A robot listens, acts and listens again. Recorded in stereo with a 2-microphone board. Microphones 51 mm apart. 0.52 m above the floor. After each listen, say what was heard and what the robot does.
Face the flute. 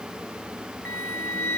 The flute: about 40° left or 140° left. Turn 40° left.
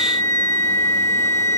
So it is at 85° left. Turn 85° left.
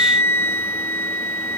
The flute is now 50° left. Turn 50° left.
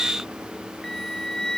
The flute is now 10° left. Turn 10° left.
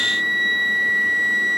Found it: a flute, straight ahead.